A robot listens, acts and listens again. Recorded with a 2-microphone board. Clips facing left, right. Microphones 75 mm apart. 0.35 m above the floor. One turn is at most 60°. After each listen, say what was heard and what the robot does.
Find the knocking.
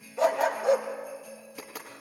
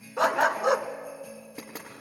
The knocking: about 30° right or 150° right. Turn 30° right.
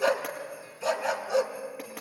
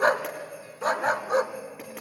Keep listening.
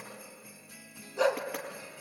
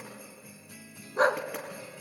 Keep listening.
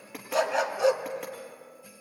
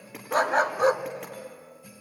Facing the knocking, over 4 m away.